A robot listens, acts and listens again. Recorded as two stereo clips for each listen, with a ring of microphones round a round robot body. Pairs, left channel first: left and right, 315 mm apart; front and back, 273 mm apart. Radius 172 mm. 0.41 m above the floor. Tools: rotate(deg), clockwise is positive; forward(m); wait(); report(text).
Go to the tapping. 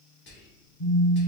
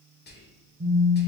wait()
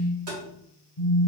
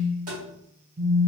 rotate(120)
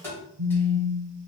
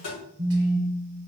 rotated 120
rotate(-10)
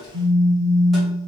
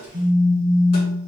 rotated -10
wait()
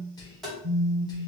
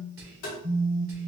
forward(1.0)
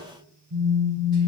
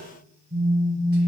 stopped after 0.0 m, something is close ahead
wait()
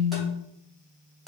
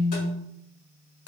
wait()
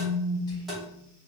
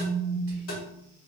report("Blocked. The tapping is further on, straight ahead.")